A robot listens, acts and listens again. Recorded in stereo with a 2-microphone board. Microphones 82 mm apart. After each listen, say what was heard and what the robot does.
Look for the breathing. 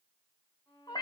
Keep listening.
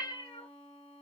Keep listening.
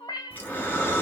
The breathing: about 20° left or 160° left. Turn 20° left.
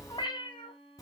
So it is at 140° left. Turn 140° left.
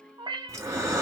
The breathing is now 35° right. Turn 35° right.
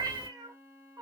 The breathing is now 10° right. Turn 10° right.
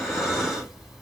Found it: breathing, straight ahead, 1 to 2 m away.